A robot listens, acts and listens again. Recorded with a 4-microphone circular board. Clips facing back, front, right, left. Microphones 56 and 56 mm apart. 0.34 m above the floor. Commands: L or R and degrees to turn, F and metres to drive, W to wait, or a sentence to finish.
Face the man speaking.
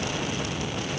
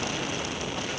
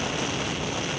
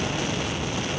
W
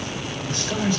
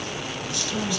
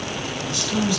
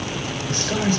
L130
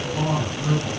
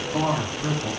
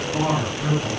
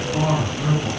R15
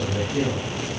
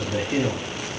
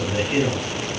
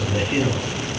R10
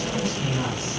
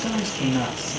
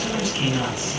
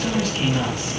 Facing the man speaking, over 4 m away.